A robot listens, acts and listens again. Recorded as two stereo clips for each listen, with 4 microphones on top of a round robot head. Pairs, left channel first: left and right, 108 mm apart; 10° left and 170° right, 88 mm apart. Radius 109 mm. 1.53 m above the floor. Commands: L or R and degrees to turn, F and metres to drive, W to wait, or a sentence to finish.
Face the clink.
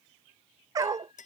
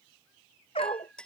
L90
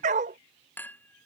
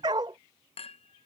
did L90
L15
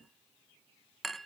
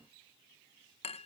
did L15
Found it: a clink, straight ahead.